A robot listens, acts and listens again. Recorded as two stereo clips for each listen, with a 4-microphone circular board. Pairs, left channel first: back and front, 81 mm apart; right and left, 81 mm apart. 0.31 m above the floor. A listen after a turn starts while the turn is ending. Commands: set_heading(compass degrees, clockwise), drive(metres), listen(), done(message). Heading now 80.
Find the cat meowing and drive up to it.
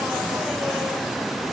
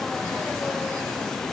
listen()
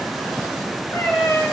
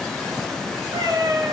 set_heading(310)
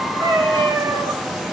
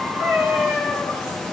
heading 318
drive(1.0)
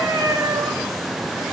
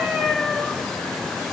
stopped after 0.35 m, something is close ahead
done("Something is in my way. I am facing the cat meowing but have not reached it.")